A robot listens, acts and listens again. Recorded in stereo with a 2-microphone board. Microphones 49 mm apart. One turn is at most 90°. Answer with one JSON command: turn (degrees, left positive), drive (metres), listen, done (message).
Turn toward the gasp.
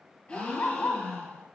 {"turn": 25}
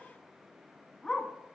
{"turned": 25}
{"listen": true}
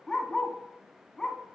{"done": "I heard a gasp, but can't make it out now. It was about straight ahead or 130° left."}